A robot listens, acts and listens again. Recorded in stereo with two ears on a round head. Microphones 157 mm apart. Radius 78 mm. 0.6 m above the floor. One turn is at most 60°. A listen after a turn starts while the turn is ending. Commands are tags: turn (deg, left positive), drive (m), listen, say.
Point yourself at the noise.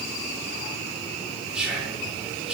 <turn deg="-30"/>
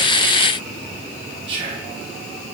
<turn deg="-60"/>
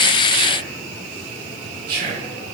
<turn deg="-60"/>
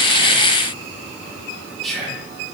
<say>Found it: whispering, straight ahead.</say>